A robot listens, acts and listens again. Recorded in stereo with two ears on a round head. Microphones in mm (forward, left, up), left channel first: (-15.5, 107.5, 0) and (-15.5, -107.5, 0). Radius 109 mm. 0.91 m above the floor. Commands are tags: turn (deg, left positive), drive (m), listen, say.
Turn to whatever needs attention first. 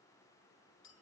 <listen/>
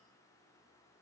<listen/>
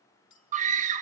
<turn deg="-35"/>
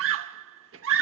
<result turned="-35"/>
<turn deg="-105"/>
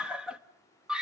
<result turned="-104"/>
<say>Facing the scream.</say>